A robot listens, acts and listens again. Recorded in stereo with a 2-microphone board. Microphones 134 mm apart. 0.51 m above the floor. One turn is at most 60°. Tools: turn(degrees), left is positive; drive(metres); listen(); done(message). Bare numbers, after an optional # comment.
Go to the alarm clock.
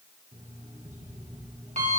# The alarm clock: about 70° right or 110° right.
turn(-60)
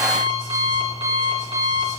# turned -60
# So it is at 45° right.
turn(-45)
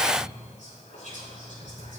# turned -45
# The alarm clock is now 25° right.
turn(-25)
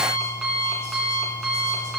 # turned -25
drive(1.0)
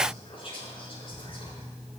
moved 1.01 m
drive(1.0)
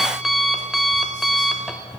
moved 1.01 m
drive(1.0)
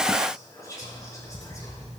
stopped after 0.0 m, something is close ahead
done("I am next to the alarm clock.")